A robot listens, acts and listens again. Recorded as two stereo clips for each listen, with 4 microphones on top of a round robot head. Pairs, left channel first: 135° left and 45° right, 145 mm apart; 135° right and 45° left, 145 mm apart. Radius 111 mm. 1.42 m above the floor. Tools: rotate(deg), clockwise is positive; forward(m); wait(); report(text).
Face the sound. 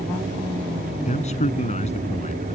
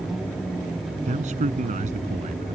rotate(-90)
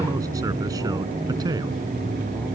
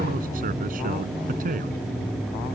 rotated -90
rotate(-20)
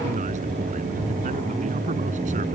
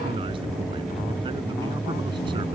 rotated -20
wait()
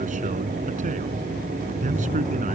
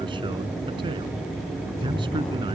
wait()
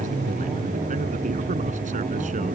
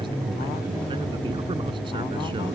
report("I heard a man speaking from this way, but can't make it out now.")